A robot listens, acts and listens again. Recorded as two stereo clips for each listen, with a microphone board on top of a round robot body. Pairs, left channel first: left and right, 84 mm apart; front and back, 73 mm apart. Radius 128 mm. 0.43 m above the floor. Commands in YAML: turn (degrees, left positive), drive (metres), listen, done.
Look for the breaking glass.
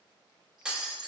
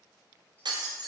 turn: -170
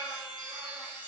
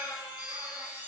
done: "I heard breaking glass from this way, but can't make it out now."